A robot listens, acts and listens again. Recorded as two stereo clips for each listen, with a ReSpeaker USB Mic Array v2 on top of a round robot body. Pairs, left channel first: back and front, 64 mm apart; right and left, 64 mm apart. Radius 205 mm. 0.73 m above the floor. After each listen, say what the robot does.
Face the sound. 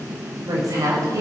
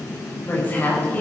Turn 25° right.
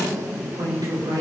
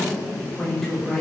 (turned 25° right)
Found it: a woman speaking, straight ahead.